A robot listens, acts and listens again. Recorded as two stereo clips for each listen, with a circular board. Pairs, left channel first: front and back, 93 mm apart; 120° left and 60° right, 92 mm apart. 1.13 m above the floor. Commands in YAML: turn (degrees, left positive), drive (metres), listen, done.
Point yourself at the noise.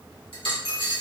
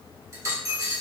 turn: -10
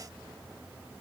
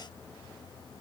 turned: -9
done: "Facing where the dropped coin came from. I can't hear it now."